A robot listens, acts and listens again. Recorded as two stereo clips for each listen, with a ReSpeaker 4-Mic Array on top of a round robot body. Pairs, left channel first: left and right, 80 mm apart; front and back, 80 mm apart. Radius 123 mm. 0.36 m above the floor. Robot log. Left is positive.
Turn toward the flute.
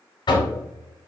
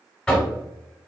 cmd idle
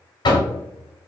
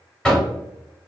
cmd idle
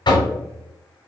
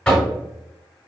end: I can't make out a flute to turn to.